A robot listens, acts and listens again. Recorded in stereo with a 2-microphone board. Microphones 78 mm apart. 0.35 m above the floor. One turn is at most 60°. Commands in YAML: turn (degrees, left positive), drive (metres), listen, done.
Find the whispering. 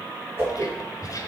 turn: 50
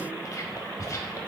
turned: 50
turn: 60
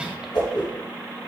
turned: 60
listen: true
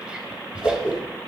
turn: -15
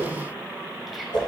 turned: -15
listen: true
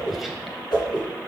listen: true
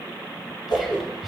done: "Found it: whispering, straight ahead."